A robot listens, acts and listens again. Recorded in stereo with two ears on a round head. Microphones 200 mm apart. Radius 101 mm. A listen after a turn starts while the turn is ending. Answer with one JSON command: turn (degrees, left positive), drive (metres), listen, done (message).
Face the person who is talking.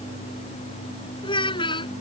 {"turn": 25}
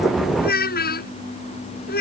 {"turn": 135}
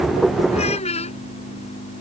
{"turn": 30}
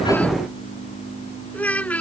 {"done": "Found it: a child speaking, straight ahead."}